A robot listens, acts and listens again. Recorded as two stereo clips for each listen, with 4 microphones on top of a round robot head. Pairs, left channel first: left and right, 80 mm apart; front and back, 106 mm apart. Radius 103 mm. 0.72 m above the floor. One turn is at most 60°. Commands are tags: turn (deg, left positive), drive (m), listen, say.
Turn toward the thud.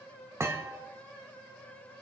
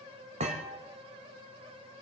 <turn deg="-60"/>
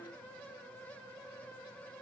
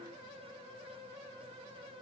<turn deg="-60"/>
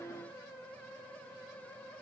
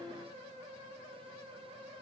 <turn deg="-30"/>
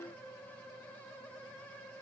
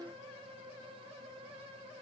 <say>I heard a thud from this way, but can't make it out now.</say>